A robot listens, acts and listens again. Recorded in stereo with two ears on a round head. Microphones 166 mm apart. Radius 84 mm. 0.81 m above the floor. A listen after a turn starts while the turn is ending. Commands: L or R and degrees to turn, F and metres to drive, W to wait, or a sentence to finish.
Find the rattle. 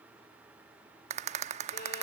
R35
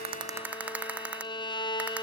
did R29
R10
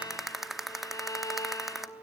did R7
Found it: a rattle, straight ahead, under 1 m away.